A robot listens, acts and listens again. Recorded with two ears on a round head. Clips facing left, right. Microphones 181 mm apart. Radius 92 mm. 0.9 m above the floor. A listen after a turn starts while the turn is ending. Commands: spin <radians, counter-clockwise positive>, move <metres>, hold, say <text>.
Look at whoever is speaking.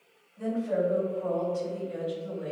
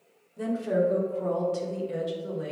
spin -1.57
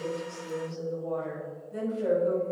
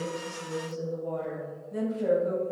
spin 0.17
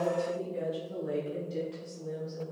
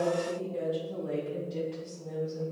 say Facing the woman speaking.